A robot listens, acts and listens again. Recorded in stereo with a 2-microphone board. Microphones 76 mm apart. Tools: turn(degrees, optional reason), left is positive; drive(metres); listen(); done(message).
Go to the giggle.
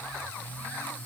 listen()
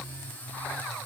listen()
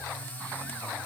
done("I can't make out a giggle to turn to.")